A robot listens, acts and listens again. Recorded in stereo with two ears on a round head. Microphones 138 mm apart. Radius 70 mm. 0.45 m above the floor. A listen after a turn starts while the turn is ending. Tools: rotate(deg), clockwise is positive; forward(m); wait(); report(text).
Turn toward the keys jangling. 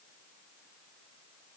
wait()
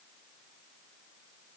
wait()
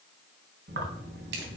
rotate(75)
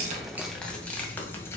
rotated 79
rotate(-20)
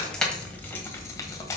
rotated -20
rotate(-20)
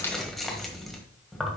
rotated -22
report("Found it: keys jangling, straight ahead.")